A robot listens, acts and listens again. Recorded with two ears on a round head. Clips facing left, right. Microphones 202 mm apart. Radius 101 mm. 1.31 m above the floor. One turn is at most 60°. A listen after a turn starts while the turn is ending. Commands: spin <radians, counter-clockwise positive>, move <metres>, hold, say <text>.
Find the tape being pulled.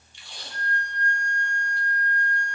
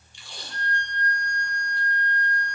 spin -1.05
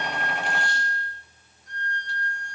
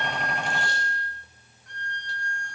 spin -0.52
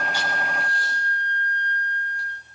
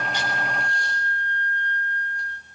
hold
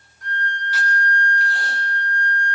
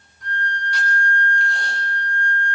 say Facing where the tape being pulled came from. I can't hear it now.